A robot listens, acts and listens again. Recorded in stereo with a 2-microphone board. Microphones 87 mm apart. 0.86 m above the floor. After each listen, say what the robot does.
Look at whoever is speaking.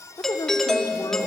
Turn 50° left.
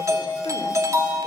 Keep listening.
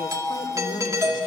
Keep listening.
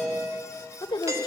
Turn 80° left.
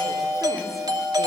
Keep listening.
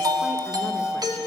Keep listening.
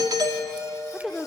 Found it: a woman speaking, straight ahead.